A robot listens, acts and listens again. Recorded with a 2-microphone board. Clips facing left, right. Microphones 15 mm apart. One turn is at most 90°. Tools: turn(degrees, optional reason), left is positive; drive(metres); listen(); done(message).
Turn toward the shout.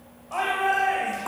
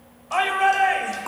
turn(degrees=-40, reason="The shout: about 40° right or 140° right.")
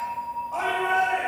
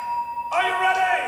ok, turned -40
turn(degrees=-90, reason="So it is at 95° right.")
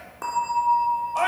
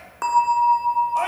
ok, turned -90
turn(degrees=10, reason="The shout is now 10° left.")
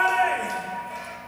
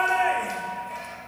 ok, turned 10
done("Facing the shout, 2 to 4 m away.")